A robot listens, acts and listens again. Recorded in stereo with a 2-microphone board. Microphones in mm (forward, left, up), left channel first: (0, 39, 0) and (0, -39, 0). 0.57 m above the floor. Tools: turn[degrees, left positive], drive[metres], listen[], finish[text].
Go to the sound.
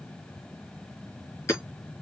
Thought: The hammering: about 35° left or 145° left.
Action: turn[35]
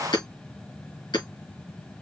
Thought: So it is at 110° left.
Action: turn[110]
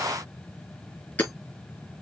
Thought: The hammering is now 25° left.
Action: turn[25]
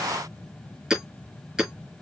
Action: drive[1.0]
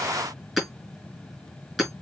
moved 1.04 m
Action: drive[1.0]
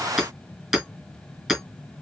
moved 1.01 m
Action: drive[1.0]
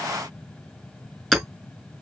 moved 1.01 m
Action: drive[1.0]
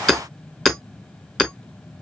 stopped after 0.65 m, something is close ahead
Action: finish[Arrived at the hammering, straight ahead.]